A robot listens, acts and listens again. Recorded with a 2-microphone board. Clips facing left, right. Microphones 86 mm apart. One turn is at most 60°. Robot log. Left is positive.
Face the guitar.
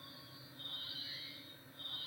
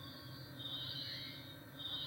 cmd idle
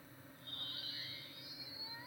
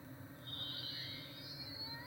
cmd idle
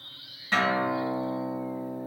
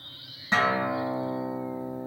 note: The guitar: about 20° right or 160° right.
cmd yaw -20
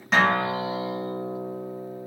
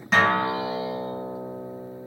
end: Found it: a guitar, straight ahead.